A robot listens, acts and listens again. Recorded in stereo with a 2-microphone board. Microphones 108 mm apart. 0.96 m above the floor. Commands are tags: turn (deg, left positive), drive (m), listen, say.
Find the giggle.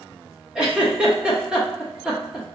<turn deg="-30"/>
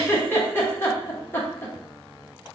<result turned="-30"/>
<turn deg="25"/>
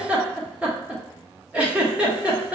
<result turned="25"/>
<turn deg="-10"/>
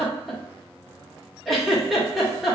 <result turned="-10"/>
<say>Facing the giggle, under 1 m away.</say>